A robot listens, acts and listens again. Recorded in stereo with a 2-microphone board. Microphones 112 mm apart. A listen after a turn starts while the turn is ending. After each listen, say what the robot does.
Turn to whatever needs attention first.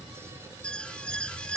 Turn 30° left.
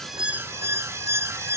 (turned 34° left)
Turn 25° right.
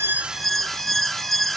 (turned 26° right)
Facing the alarm.